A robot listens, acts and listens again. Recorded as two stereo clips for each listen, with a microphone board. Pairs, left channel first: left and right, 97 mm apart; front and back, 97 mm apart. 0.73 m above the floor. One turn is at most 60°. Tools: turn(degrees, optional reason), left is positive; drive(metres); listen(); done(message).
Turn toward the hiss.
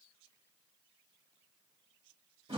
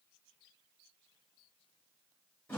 listen()
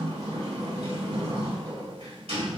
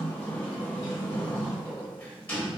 listen()
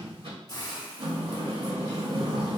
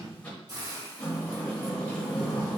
turn(degrees=60, reason="The hiss: 135° left.")
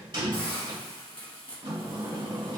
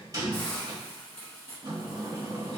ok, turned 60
turn(degrees=60, reason="The hiss is now 80° left.")
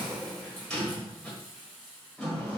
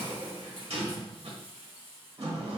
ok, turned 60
turn(degrees=20, reason="The hiss is now 20° left.")
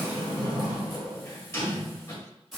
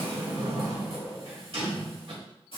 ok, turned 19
done("Found it: a hiss, straight ahead.")